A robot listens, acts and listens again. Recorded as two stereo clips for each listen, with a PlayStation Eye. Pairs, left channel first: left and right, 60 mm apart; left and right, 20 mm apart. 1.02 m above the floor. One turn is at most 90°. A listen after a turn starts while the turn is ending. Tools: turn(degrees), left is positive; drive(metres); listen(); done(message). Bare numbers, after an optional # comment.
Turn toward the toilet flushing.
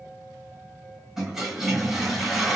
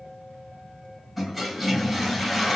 turn(-30)
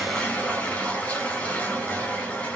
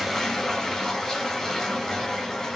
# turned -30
# So it is at 25° left.
turn(25)
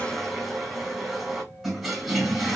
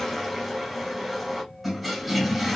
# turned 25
done("Facing the toilet flushing, 2 to 4 m away.")